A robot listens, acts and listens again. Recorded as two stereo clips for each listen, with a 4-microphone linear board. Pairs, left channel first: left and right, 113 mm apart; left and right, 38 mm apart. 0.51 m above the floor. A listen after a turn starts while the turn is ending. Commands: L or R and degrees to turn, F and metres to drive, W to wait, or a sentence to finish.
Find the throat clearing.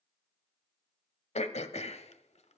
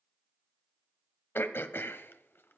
L90
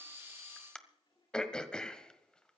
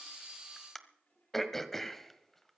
L10
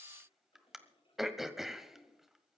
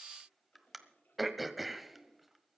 Facing the throat clearing, 1 to 2 m away.